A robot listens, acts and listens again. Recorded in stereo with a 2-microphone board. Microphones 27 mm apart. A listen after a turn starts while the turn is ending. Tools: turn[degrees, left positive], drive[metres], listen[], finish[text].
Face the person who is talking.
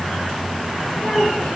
Action: turn[90]
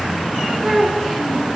Action: finish[Found it: a child speaking, straight ahead, 2 to 4 m away.]